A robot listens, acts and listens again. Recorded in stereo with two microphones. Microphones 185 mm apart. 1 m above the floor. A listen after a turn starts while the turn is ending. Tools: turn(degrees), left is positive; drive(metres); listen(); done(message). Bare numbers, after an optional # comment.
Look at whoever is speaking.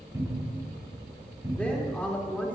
turn(30)
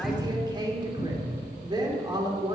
# So it is at 25° right.
turn(-25)
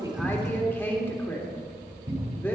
# The woman speaking is now 10° left.
turn(10)
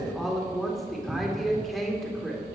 done("Facing the woman speaking.")